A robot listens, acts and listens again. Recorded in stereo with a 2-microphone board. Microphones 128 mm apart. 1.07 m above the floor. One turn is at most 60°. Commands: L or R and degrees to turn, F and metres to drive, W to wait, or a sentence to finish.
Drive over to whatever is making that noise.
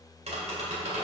R60
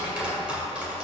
R10
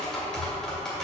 F1.0
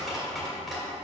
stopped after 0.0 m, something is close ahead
Something is in my way. I am facing the tapping but have not reached it.